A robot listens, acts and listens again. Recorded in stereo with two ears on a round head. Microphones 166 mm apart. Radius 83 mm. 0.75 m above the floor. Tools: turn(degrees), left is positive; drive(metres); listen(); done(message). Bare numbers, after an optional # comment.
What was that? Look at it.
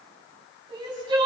# The crying: about 25° right or 155° right.
turn(-25)
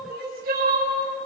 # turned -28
# So it is at 125° right.
turn(-125)
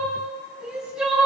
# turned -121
done("Found it: crying, straight ahead.")